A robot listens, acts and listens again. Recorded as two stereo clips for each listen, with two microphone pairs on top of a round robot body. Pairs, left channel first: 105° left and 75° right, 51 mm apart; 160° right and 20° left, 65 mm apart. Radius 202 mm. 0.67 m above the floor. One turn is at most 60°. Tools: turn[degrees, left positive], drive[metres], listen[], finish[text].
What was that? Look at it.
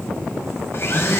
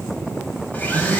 Thought: The blender: 140° left.
Action: turn[60]
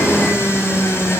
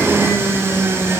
Thought: The blender is now 75° left.
Action: turn[60]
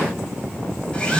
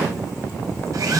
Thought: The blender is now 35° left.
Action: turn[35]
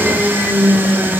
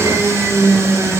Thought: The blender is now 20° right.
Action: turn[-20]
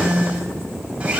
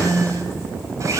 Thought: The blender is now 10° right.
Action: turn[-10]
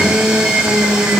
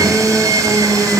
Action: finish[Found it: a blender, straight ahead.]